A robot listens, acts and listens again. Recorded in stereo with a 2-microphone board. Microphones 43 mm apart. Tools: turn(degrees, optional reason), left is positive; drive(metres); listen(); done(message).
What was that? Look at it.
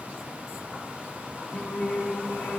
turn(degrees=40, reason="The singing: about 40° left or 140° left.")
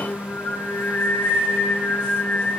turn(degrees=45, reason="The singing: about 45° left or 135° left.")
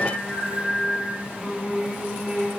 turn(degrees=-15, reason="So it is at 15° right.")
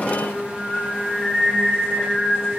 done("Found it: singing, straight ahead.")